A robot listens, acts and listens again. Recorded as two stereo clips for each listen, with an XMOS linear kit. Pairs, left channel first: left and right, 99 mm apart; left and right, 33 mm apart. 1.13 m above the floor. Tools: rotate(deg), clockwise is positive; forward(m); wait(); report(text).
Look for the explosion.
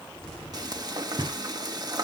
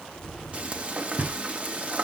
rotate(-30)
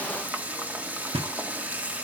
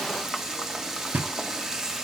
wait()
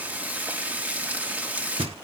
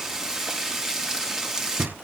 report("I heard an explosion, but can't make it out now. It was about 25° right or 145° left.")